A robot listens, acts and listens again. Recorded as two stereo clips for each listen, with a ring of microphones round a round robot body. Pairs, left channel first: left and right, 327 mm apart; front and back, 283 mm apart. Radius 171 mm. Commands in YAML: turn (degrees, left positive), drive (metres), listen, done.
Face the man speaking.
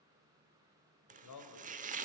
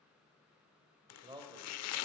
turn: 105
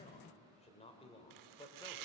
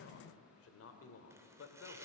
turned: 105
turn: 15
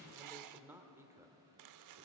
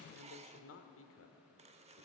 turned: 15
turn: -10
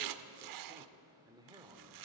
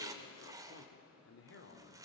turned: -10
turn: -15
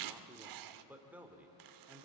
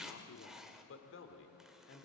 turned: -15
done: "Facing the man speaking."